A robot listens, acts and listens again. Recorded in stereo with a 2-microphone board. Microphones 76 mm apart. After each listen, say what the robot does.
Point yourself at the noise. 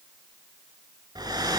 Turn 60° right.
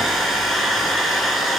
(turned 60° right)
Found it: a hair dryer, straight ahead.